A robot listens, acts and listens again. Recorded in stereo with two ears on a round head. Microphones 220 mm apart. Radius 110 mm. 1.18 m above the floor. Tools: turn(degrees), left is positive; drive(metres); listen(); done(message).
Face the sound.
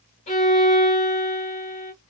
turn(degrees=25)
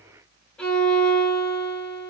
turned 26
done("Found it: a violin, straight ahead.")